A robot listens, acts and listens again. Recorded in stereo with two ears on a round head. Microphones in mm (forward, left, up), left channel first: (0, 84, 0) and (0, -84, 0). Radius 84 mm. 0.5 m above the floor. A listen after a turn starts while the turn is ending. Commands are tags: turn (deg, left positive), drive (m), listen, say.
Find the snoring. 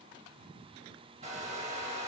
<listen/>
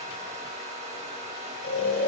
<turn deg="70"/>
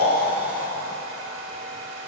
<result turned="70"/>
<turn deg="10"/>
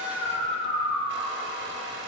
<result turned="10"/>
<say>Facing the snoring, under 1 m away.</say>